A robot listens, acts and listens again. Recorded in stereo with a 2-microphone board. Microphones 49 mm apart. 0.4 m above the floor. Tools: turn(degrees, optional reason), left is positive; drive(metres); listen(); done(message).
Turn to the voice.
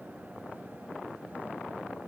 listen()
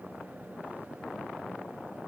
listen()
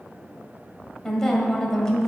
turn(degrees=30)
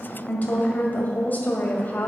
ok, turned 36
turn(degrees=135, reason="So it is at 135° left.")
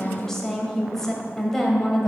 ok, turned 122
turn(degrees=10, reason="The woman speaking is now 10° left.")
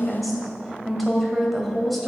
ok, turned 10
done("Facing the woman speaking, 1 to 2 m away.")